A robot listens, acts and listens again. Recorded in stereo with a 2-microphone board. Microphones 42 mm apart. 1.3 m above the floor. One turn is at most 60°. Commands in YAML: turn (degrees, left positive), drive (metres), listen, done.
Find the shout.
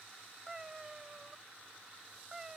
listen: true
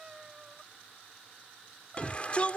turn: 35
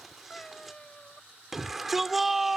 done: "Facing the shout."